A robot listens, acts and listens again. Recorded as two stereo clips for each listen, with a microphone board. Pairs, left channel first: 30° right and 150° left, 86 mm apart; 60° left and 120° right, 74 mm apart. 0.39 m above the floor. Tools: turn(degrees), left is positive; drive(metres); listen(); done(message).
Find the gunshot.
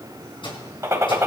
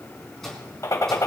turn(degrees=100)
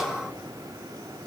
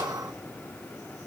done("Facing where the gunshot came from. I can't hear it now.")